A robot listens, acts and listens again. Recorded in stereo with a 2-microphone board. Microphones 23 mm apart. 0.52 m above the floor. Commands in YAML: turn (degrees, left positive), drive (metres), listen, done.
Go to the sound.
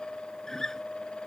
turn: 20
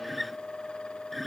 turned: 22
drive: 1.0
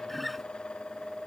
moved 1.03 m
drive: 1.0
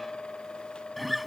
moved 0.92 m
drive: 1.0
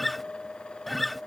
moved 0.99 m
drive: 1.0
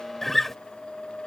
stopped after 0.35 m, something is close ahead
turn: 10
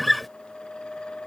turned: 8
done: "I am next to the guitar."